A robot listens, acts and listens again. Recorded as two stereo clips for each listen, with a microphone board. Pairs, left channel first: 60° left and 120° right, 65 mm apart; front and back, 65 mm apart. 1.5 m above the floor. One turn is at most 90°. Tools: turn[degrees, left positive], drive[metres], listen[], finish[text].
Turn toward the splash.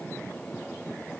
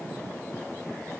Action: listen[]
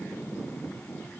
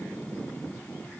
Action: listen[]
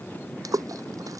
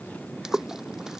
Thought: The splash: 100° right.
Action: turn[-90]
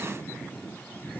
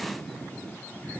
Thought: Nothing new. It was at 10° right.
Action: turn[-10]
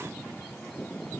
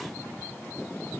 Action: finish[I heard a splash from this way, but can't make it out now.]